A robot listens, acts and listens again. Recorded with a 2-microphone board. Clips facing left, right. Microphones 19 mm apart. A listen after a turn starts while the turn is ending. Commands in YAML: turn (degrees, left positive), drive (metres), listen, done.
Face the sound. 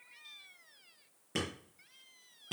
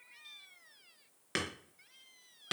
turn: -90
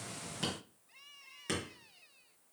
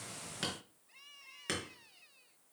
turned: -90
turn: -15
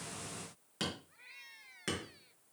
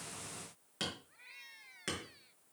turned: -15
done: "Found it: hammering, straight ahead."